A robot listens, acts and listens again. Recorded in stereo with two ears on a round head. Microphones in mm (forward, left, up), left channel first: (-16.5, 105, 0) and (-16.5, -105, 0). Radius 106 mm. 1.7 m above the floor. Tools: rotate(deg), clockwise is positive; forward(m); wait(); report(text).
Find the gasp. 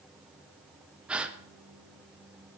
rotate(30)
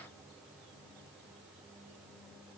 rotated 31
wait()
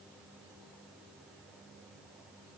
report("I heard a gasp, but can't make it out now. It was about 25° left or 145° right.")